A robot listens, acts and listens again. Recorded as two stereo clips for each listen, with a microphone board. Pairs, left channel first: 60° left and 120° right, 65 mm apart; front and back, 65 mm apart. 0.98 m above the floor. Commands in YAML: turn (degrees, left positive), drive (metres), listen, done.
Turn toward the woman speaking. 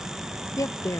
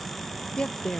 turn: 75
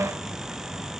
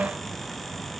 listen: true
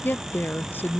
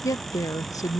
turn: 10
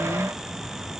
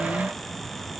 listen: true
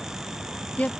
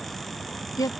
done: "Facing the woman speaking."